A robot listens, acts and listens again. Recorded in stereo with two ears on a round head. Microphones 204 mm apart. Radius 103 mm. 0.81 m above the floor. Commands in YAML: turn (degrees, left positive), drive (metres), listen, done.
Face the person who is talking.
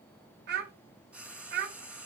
turn: -45
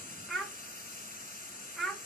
done: "Found it: a child speaking, straight ahead, 1 to 2 m away."